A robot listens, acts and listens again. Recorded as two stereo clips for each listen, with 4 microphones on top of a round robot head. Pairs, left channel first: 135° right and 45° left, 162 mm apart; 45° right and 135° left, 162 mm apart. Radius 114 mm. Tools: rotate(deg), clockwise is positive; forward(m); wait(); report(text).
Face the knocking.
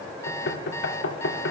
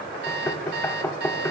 rotate(125)
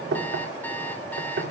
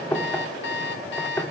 rotate(-30)
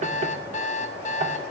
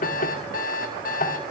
report("Facing the knocking, 1 to 2 m away.")